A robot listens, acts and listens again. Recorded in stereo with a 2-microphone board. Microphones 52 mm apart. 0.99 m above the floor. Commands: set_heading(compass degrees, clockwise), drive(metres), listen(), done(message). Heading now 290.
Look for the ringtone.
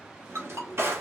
set_heading(0)
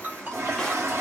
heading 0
set_heading(35)
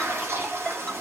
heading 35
listen()
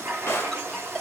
listen()
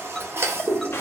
done("I heard a ringtone from this way, but can't make it out now.")